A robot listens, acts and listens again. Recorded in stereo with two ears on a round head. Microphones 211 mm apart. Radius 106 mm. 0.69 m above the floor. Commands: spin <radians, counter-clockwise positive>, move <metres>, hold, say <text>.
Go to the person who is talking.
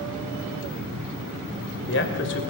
spin 0.96
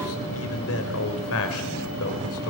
spin 1.22
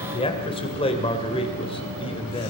spin 0.44
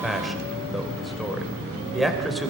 move 1.0
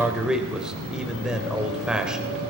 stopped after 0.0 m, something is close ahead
say Something is in my way. I am facing the man speaking but have not reached it.